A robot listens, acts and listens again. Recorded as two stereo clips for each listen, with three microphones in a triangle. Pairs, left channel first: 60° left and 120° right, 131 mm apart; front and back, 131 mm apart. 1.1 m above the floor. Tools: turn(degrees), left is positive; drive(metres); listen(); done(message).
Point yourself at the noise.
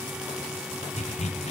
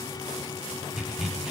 turn(degrees=95)
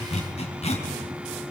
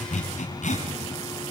turn(degrees=25)
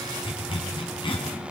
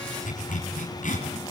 turn(degrees=10)
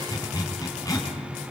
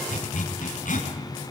done("Found it: a zipper, straight ahead, over 4 m away.")